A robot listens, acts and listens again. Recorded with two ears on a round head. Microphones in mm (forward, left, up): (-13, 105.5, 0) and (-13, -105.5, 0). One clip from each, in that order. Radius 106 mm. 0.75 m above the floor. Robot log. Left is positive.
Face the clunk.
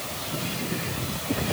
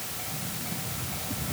cmd idle
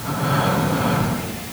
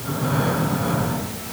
cmd idle
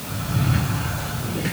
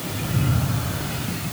end: I can't make out a clunk, only breathing.